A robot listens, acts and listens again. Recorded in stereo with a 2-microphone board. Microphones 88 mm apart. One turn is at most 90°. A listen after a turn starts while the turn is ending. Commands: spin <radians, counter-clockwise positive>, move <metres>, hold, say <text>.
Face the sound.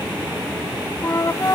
spin 0.61
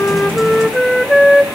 say Facing the flute, under 1 m away.